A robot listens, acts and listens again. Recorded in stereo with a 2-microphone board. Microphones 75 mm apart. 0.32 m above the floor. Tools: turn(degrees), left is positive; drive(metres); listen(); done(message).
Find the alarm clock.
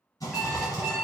turn(degrees=-30)
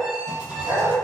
turn(degrees=20)
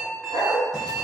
done("Found it: an alarm clock, straight ahead, 1 to 2 m away.")